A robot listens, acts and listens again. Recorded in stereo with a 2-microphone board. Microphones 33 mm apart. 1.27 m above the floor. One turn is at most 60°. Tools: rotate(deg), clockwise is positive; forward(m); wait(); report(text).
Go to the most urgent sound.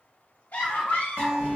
rotate(-60)
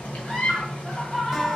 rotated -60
rotate(-15)
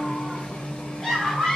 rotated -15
rotate(-10)
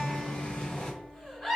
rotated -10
forward(1.0)
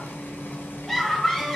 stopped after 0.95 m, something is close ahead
report("I am next to the scream.")